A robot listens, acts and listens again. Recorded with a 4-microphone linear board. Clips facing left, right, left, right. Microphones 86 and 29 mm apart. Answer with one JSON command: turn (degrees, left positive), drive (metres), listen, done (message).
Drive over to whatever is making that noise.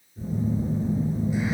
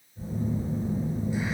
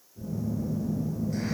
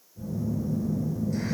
{"turn": 15}
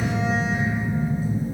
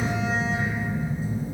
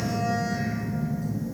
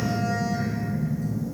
{"turn": 150}
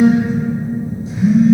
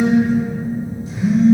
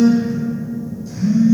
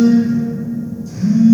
{"turn": 20}
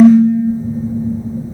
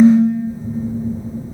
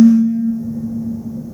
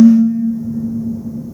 {"drive": 1.0}
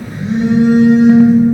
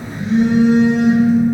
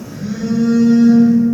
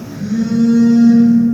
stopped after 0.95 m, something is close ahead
{"turn": 10}
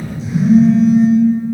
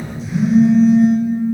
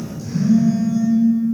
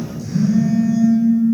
{"done": "Arrived at the phone buzzing, straight ahead."}